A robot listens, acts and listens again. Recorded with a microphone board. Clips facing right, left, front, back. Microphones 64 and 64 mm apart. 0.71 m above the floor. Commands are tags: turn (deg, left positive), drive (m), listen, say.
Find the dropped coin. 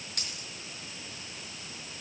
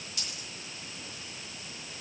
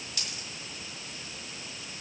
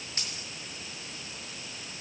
<turn deg="-120"/>
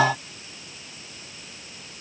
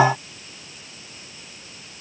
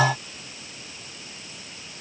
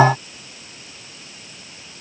<say>I heard a dropped coin from this way, but can't make it out now.</say>